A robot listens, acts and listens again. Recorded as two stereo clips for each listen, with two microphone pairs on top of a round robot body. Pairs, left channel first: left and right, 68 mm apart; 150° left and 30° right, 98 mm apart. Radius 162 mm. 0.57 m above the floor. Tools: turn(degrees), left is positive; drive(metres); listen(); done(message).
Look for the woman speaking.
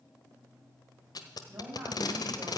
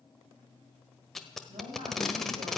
turn(degrees=-45)
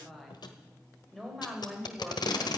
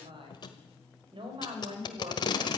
done("Found it: a woman speaking, straight ahead.")